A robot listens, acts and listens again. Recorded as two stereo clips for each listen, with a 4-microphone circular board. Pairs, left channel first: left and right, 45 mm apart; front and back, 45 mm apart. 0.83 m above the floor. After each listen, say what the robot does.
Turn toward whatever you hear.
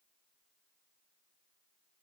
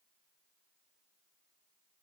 Keep listening.
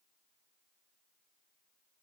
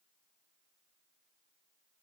Keep listening.
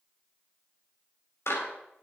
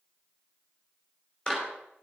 Turn 70° left.
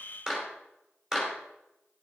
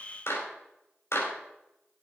Turn 10° right.
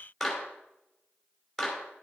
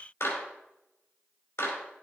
Found it: a clap, straight ahead.